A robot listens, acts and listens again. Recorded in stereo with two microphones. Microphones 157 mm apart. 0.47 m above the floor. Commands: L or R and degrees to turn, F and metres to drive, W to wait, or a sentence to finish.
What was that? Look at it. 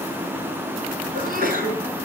R65
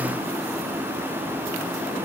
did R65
W
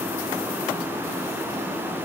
I heard a sneeze, but can't make it out now. It was about straight ahead or 50° right.